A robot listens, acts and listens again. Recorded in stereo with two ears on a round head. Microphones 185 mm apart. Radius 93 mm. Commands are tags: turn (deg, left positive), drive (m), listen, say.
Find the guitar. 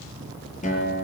<turn deg="40"/>
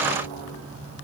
<listen/>
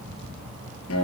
<turn deg="100"/>
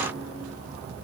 <listen/>
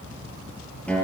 <say>Facing the guitar, over 4 m away.</say>